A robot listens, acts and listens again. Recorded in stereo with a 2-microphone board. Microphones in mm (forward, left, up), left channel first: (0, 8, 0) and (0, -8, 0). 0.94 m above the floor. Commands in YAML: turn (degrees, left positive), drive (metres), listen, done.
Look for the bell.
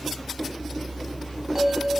turn: -50
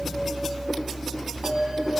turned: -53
turn: -75
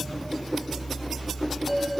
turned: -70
done: "Facing the bell, 1 to 2 m away."